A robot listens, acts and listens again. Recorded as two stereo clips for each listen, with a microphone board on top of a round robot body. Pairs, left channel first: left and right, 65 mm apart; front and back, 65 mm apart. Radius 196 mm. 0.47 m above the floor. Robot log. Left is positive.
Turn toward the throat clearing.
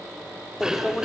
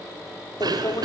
note: The throat clearing: 170° right.
cmd yaw -170
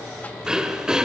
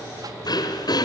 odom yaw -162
note: The throat clearing is now 10° right.
cmd yaw -10
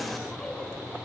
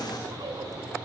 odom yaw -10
cmd idle
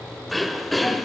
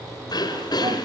end: Found it: throat clearing, straight ahead.